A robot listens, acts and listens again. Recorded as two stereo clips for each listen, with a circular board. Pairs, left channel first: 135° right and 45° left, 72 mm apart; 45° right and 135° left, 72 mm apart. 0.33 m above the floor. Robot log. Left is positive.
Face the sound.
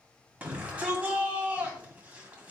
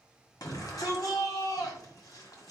note: The shout: 20° right.
cmd yaw -20
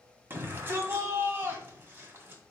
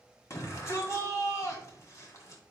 note: The shout is now 10° right.
cmd yaw -10
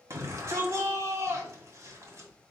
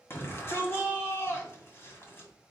end: Facing the shout, 1 to 2 m away.